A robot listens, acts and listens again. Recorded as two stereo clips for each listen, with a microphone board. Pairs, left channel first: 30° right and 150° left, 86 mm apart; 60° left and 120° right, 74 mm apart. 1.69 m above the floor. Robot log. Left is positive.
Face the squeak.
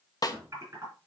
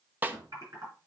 note: The squeak: 165° left.
cmd yaw +165
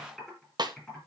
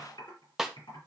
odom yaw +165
cmd idle
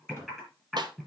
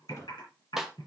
cmd idle
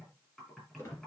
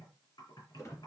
note: The squeak is now 20° left.
cmd yaw +20
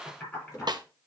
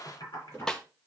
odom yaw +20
end: Facing the squeak.